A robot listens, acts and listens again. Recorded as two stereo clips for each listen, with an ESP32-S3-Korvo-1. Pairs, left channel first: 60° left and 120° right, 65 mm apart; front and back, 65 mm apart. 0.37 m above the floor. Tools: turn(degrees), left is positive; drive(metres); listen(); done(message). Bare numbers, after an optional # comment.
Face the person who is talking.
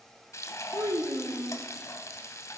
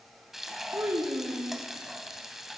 # The child speaking: 135° right.
turn(-135)
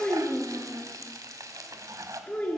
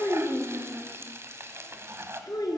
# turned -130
done("Facing the child speaking, 2 to 4 m away.")